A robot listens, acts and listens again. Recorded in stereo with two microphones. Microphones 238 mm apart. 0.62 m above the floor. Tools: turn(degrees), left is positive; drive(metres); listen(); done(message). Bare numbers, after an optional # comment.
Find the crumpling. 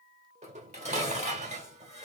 listen()
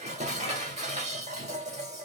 listen()
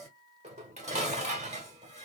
done("I can't make out crumpling, only dishes clattering.")